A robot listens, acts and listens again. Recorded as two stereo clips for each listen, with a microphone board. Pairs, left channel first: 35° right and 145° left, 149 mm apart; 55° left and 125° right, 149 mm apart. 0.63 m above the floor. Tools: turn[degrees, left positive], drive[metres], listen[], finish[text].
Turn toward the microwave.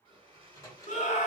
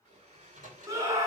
Thought: The microwave: 100° right.
Action: turn[-100]
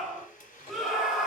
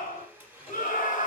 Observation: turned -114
Thought: Nothing new. It was at 10° left.
Action: turn[10]
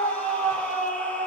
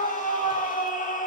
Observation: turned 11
Action: listen[]
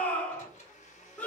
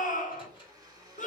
Action: finish[Facing the microwave, 2 to 4 m away.]